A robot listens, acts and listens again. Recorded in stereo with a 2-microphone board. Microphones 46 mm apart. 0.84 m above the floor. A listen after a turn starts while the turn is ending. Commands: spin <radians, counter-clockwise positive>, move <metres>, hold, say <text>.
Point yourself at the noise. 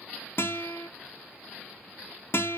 spin 0.96
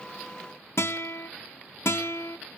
spin 1.13
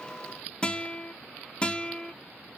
spin 0.44
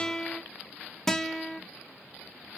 spin 0.17
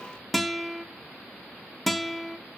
say Facing the guitar, 1 to 2 m away.